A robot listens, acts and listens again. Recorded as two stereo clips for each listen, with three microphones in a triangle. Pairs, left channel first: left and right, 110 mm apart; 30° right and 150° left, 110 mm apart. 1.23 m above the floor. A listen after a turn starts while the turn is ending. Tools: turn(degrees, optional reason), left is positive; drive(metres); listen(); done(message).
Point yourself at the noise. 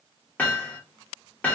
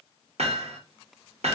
turn(degrees=165, reason="The hammering: 165° left.")
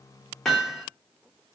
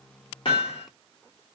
done("Facing the hammering, 1 to 2 m away.")